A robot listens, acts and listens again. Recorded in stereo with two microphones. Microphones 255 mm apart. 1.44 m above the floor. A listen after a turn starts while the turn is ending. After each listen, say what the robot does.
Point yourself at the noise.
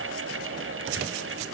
Keep listening.
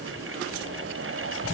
Keep listening.
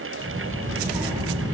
Turn 15° right.
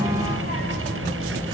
Turn 35° right.
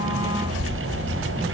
Turn 105° right.
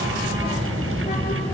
Turn 25° left.
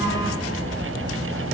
Found it: a child speaking, straight ahead, 2 to 4 m away.